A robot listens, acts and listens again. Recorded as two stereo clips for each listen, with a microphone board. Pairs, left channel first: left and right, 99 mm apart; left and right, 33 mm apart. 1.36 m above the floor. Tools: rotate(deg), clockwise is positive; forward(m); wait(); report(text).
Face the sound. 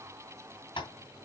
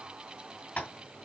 rotate(-55)
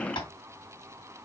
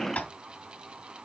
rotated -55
rotate(-60)
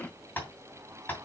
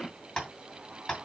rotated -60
rotate(-20)
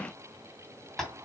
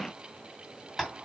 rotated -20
report("Found it: tapping, straight ahead.")